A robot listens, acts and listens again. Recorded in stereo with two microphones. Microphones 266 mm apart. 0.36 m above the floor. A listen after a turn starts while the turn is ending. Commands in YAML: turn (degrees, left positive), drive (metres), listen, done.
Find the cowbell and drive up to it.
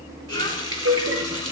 turn: -55
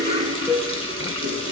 drive: 1.0
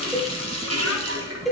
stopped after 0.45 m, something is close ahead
done: "Blocked. The cowbell is further on, straight ahead."